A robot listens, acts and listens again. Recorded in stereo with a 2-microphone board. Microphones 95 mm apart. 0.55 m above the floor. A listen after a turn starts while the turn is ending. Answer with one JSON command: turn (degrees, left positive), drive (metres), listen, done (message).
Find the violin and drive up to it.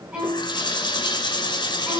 {"turn": -30}
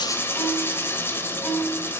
{"turn": 20}
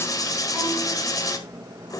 {"listen": true}
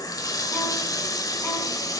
{"listen": true}
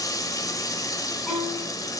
{"drive": 1.0}
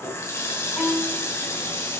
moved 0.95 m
{"drive": 1.0}
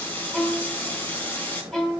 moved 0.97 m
{"turn": 10}
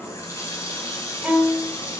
{"drive": 1.0}
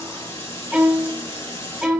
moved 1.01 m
{"drive": 1.0}
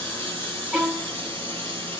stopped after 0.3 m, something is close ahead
{"done": "I am next to the violin."}